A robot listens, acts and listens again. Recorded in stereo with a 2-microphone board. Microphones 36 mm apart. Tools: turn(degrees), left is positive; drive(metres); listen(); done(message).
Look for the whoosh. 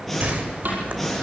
turn(degrees=-50)
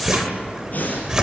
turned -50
turn(degrees=-15)
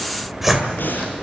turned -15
done("Facing the whoosh.")